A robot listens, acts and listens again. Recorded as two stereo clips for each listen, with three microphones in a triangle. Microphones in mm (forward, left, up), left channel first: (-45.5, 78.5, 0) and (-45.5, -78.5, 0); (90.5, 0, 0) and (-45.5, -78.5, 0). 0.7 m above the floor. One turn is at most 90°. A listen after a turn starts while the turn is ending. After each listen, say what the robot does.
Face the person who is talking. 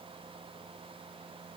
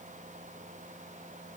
Keep listening.
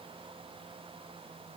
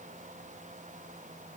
Keep listening.
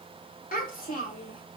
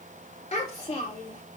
Turn 75° left.
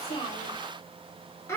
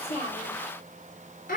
Turn 20° left.
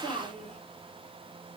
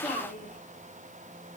Found it: a child speaking, straight ahead.